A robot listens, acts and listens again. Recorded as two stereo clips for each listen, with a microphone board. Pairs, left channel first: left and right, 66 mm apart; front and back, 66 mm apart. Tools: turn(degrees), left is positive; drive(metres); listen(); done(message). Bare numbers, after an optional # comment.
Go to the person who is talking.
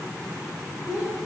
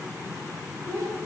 # The child speaking: 160° right.
turn(-160)
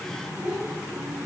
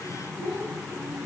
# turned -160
# The child speaking is now 30° right.
turn(-30)
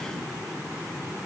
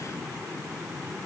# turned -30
listen()
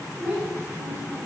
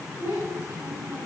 # The child speaking is now 20° right.
turn(-20)
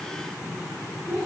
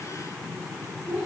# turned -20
drive(1.0)
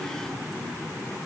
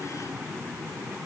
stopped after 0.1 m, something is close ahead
listen()
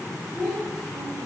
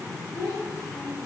done("Blocked. The child speaking is further on, straight ahead.")